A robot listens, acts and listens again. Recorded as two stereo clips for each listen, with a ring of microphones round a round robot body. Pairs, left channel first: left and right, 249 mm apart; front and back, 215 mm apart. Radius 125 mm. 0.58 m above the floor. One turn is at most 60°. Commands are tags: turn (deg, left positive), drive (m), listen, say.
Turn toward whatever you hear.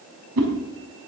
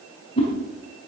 <turn deg="-60"/>
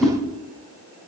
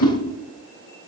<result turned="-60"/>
<say>Found it: a whoosh, straight ahead.</say>